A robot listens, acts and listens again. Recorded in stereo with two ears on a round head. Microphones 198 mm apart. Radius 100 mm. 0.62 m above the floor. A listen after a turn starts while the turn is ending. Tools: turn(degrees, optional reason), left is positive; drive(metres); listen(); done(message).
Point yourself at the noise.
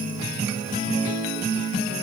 listen()
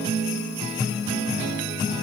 listen()
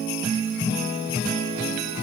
done("I can't make out anything to turn to.")